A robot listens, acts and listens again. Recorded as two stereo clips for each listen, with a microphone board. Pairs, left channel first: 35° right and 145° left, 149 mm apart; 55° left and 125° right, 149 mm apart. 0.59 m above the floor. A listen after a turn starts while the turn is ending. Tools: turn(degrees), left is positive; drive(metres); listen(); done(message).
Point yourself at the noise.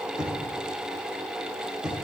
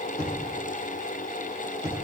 turn(degrees=60)
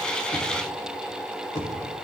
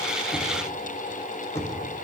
turn(degrees=-15)
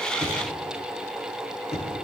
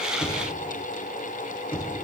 done("Facing the knocking.")